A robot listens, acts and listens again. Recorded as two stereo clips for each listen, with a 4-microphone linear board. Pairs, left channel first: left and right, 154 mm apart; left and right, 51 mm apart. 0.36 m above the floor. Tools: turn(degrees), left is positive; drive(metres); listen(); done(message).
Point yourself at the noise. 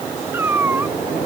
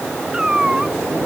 turn(degrees=-30)
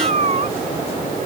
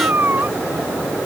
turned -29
turn(degrees=-135)
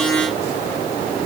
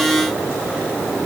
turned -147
turn(degrees=10)
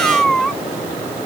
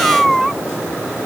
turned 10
done("Facing the cat meowing.")